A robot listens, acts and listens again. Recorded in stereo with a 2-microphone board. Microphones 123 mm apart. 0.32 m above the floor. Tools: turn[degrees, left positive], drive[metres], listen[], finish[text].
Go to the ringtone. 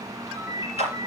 Thought: The ringtone: about 20° right or 160° right.
Action: turn[-20]
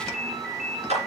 Action: drive[1.0]
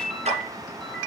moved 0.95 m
Action: drive[1.0]
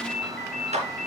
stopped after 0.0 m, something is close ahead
Action: finish[Blocked. The ringtone is further on, straight ahead.]